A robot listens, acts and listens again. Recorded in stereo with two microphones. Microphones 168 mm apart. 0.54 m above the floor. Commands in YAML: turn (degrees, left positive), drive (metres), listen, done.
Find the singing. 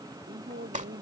turn: -90
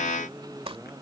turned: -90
done: "Found it: singing, straight ahead."